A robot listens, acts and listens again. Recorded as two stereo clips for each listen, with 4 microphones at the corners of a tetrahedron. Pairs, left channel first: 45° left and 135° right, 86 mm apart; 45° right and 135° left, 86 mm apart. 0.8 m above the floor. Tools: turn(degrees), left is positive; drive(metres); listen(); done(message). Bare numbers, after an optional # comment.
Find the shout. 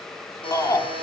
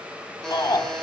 done("Facing the shout, 2 to 4 m away.")